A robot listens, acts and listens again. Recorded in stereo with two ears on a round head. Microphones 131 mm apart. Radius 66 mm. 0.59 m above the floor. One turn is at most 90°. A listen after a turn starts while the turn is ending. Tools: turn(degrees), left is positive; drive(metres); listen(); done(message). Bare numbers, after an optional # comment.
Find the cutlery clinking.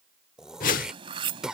# The cutlery clinking: about 40° right or 140° right.
turn(-40)
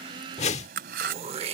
# So it is at 100° right.
turn(-90)
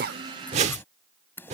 # The cutlery clinking is now 15° left.
turn(15)
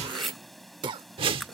done("Found it: cutlery clinking, straight ahead.")